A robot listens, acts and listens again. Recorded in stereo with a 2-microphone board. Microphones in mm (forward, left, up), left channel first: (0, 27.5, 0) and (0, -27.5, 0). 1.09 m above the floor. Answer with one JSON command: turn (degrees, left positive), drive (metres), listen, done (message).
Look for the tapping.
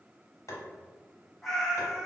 {"turn": 70}
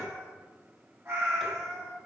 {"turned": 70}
{"listen": true}
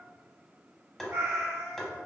{"done": "Facing the tapping, under 1 m away."}